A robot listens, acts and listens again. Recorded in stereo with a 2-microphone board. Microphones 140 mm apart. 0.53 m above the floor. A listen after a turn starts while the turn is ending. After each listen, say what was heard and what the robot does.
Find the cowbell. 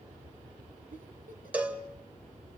Turn 30° right.
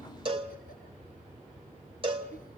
So it is at 135° right. Turn 135° right.
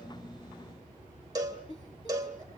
The cowbell is now 30° right. Turn 30° right.
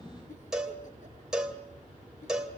Facing the cowbell.